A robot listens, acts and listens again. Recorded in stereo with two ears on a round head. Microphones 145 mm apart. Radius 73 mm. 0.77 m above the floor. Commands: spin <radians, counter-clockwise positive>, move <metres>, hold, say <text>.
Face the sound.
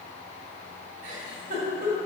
spin -0.79
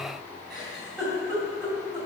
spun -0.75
say Found it: a giggle, straight ahead.